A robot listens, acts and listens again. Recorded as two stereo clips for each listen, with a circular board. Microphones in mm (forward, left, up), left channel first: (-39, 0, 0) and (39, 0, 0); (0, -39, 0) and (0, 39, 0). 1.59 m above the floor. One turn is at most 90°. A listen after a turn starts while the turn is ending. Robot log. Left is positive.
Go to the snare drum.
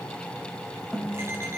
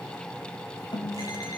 note: The snare drum: 100° right.
cmd yaw -90
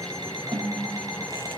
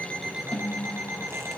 note: The snare drum is now 20° right.
cmd yaw -20
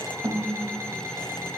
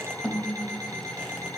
cmd fwd 1.0
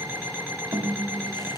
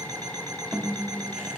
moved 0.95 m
cmd fwd 1.0
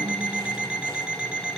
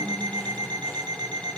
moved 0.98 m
cmd idle
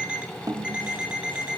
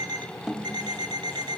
cmd fwd 1.0
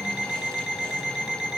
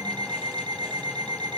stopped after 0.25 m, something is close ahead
cmd idle
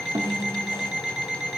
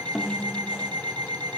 end: Arrived at the snare drum, straight ahead.